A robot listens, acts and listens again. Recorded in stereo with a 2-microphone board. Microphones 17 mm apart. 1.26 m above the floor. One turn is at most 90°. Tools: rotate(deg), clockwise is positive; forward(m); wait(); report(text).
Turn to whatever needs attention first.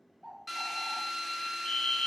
rotate(-50)
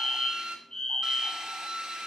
rotate(-70)
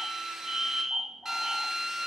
rotate(30)
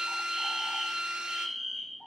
report("Facing the fire alarm, 1 to 2 m away.")